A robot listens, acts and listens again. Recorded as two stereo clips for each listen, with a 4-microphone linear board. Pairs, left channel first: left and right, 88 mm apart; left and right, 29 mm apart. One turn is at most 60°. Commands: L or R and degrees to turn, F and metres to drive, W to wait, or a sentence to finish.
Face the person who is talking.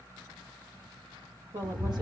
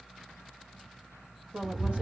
R60
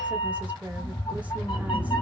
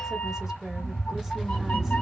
W
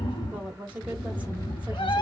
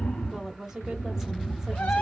R20
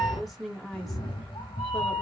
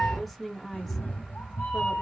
Found it: a woman speaking, straight ahead, 1 to 2 m away.